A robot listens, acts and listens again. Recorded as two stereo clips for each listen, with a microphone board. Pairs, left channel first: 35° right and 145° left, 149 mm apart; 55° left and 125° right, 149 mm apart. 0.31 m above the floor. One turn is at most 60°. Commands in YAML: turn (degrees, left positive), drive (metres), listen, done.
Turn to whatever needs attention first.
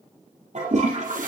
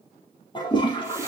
listen: true
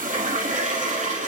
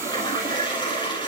listen: true
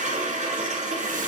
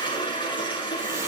done: "I can't make out anything urgent, only a toilet flushing."